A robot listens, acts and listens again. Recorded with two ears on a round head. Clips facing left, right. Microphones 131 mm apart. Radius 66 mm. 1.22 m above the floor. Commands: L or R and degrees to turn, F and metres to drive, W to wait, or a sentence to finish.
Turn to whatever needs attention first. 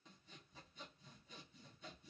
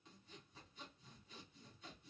W
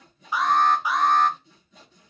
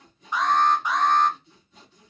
L30
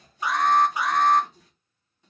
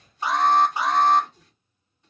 R25
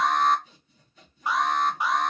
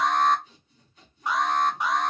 Found it: an alarm, straight ahead, under 1 m away.